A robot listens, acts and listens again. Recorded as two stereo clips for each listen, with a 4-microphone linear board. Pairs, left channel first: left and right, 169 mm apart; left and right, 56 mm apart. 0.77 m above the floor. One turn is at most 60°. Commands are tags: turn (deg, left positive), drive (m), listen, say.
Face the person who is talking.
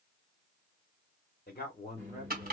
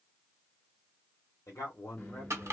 <turn deg="60"/>
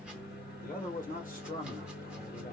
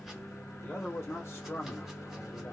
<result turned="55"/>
<turn deg="55"/>
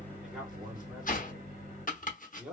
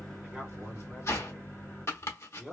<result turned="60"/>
<say>Facing the man speaking.</say>